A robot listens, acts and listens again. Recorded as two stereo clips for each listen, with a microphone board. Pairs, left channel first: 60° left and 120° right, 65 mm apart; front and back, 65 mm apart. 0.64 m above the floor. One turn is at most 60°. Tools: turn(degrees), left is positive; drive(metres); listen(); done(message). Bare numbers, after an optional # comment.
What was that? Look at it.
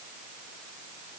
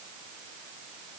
listen()
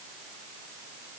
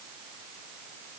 listen()
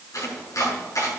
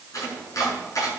# The chopping: 30° left.
turn(30)
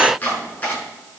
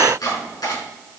done("Facing the chopping.")